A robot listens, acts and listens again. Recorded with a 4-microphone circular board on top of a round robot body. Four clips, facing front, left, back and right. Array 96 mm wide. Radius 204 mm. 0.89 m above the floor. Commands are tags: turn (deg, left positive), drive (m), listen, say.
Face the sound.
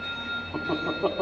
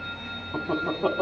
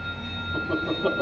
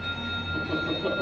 <turn deg="55"/>
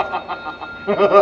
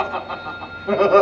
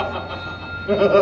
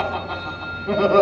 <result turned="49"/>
<turn deg="15"/>
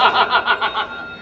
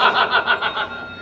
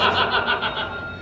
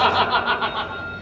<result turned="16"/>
<say>Facing the laughter, over 4 m away.</say>